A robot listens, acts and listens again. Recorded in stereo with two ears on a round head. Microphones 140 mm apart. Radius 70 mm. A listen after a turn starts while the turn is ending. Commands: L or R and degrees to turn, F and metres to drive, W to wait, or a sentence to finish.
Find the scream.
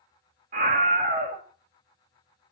R50
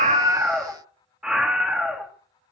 Facing the scream.